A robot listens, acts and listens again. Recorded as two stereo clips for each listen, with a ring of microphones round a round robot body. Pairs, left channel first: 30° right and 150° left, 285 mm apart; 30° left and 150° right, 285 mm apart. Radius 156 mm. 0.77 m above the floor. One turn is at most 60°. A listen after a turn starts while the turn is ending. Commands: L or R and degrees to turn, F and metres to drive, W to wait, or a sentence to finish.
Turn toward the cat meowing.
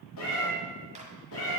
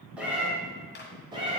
R60
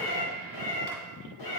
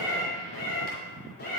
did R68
R30
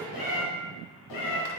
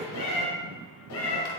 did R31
R15
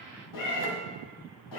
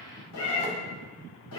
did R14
R15
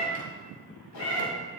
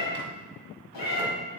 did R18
Found it: a cat meowing, straight ahead, 2 to 4 m away.